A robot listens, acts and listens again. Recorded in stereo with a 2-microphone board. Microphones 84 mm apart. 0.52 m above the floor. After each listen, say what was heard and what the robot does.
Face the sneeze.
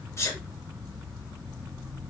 The sneeze: about 35° left or 145° left. Turn 35° left.
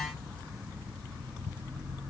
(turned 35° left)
Keep listening.
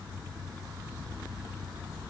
I heard a sneeze, but can't make it out now. It was about straight ahead or 110° left.